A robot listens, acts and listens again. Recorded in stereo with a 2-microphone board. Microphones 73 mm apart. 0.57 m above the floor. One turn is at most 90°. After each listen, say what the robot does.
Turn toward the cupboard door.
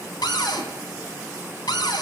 Turn 90° left.
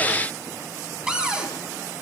Turn 15° right.
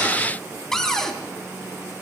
Found it: a cupboard door, straight ahead, 2 to 4 m away.